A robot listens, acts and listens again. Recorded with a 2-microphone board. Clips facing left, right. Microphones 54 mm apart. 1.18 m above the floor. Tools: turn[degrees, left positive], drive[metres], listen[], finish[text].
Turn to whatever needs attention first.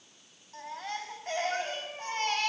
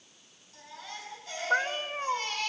Thought: The baby crying: about 50° left or 130° left.
Action: turn[50]
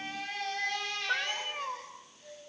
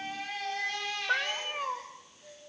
Action: finish[Found it: a baby crying, straight ahead.]